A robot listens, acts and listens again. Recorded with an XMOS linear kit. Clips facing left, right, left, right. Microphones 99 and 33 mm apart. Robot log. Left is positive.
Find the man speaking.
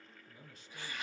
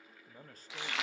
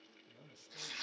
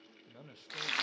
note: The man speaking: about 40° right or 140° right.
cmd yaw -40
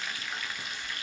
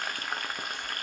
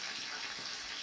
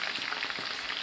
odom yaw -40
cmd idle
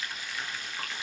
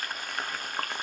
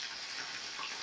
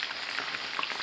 cmd idle
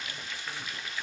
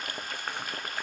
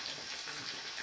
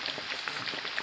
end: I heard a man speaking, but can't make it out now. It was about straight ahead or 100° right.